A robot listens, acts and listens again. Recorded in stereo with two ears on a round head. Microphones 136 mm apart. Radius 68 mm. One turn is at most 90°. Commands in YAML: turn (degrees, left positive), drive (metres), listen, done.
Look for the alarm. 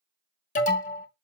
turn: 55
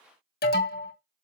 turn: 70
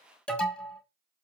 done: "Found it: an alarm, straight ahead."